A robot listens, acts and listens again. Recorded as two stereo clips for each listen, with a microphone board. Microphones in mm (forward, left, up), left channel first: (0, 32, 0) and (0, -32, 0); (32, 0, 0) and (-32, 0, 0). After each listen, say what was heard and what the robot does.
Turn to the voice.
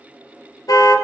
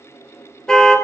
Keep listening.
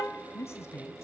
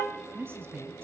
The woman speaking: 130° left. Turn 130° left.
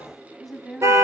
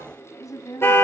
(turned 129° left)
Facing the woman speaking, 2 to 4 m away.